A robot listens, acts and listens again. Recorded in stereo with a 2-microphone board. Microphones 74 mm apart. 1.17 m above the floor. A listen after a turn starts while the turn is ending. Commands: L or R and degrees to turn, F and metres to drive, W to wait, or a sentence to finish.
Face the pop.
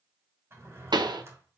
R75
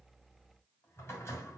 W
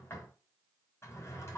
I heard a pop, but can't make it out now. It was about straight ahead or 30° right.